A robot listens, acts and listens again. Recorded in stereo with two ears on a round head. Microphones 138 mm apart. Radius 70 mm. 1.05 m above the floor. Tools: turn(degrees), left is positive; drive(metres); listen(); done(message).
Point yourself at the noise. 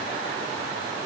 listen()
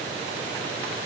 listen()
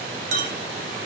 turn(degrees=-50)
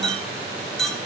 done("Found it: a clink, straight ahead.")